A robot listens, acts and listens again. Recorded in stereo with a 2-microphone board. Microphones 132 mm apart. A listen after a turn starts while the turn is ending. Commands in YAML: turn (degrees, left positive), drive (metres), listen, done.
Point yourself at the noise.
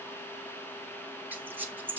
turn: -30
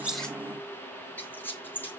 turn: 15
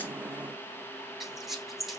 done: "Found it: a squeak, straight ahead."